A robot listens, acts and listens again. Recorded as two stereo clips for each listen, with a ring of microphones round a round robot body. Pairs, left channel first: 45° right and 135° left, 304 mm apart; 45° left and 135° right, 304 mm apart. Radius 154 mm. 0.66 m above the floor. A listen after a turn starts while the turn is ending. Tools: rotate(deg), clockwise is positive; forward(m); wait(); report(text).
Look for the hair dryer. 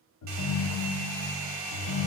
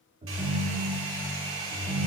rotate(-175)
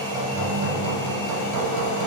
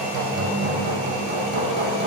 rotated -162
rotate(-10)
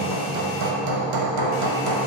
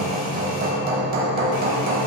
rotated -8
wait()
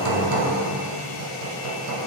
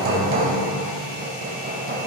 report("Facing where the hair dryer came from. I can't hear it now.")